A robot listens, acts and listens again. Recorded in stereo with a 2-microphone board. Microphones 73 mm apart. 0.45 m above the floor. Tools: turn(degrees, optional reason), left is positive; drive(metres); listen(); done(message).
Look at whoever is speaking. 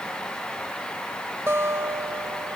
listen()
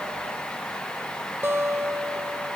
listen()
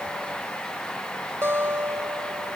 done("I can't make out anyone speaking, only a guitar.")